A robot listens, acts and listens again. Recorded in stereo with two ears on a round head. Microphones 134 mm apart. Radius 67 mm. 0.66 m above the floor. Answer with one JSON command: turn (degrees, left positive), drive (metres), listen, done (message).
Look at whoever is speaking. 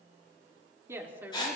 {"turn": -30}
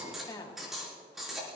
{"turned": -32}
{"turn": 40}
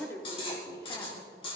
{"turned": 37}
{"turn": 20}
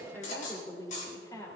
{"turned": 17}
{"turn": 25}
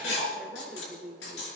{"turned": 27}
{"done": "Found it: a woman speaking, straight ahead."}